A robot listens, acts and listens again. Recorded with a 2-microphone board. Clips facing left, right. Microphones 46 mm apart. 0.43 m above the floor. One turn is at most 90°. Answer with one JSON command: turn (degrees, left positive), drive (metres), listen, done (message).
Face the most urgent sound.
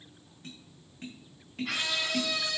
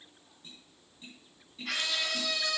{"turn": 30}
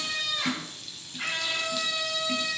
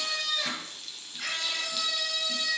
{"turn": 90}
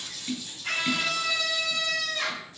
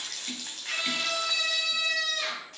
{"turn": 65}
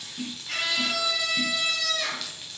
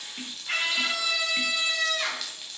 {"turn": -30}
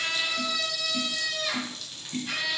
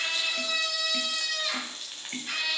{"done": "Found it: a scream, straight ahead, 2 to 4 m away."}